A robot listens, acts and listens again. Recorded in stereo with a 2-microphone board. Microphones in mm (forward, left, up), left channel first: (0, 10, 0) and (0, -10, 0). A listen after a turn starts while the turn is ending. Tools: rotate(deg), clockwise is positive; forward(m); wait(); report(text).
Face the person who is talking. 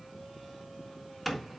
wait()
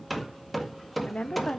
rotate(-90)
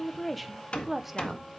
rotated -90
rotate(10)
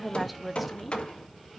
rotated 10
report("Facing the woman speaking.")